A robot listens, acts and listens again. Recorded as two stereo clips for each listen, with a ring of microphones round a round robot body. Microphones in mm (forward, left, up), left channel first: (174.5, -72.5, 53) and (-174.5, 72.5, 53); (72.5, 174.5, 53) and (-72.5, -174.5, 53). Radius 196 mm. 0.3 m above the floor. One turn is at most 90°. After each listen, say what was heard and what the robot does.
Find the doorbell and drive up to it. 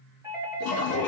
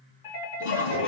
The doorbell: 75° left. Turn 75° left.
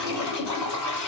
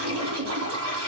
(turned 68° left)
Nothing new. It was at 10° left. Turn 10° left.
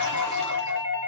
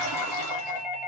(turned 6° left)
Drive 1.0 m forward.
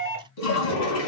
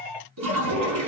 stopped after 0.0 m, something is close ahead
Blocked. The doorbell is further on, straight ahead.